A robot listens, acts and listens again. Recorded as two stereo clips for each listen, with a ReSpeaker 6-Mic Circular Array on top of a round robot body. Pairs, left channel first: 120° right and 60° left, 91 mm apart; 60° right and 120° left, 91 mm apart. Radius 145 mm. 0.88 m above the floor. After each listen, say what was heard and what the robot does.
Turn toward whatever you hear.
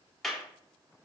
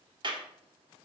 The clap: 155° left. Turn 155° left.
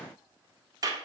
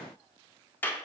The clap is now 10° left. Turn 10° left.
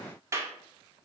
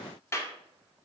Facing the clap, 1 to 2 m away.